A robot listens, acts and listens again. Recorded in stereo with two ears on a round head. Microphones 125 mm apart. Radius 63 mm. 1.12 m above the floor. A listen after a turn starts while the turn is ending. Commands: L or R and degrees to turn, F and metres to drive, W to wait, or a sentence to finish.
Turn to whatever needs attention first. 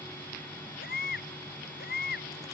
L90
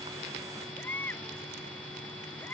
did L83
L15
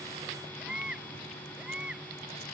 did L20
Found it: a baby crying, straight ahead.